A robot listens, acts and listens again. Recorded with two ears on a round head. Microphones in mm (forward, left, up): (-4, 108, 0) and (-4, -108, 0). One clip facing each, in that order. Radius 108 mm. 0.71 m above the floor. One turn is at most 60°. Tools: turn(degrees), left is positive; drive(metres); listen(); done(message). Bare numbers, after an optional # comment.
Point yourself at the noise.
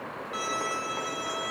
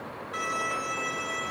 # The violin: about 25° left or 155° left.
turn(25)
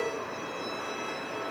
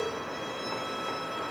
listen()
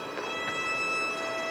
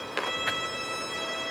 done("Facing the violin, over 4 m away.")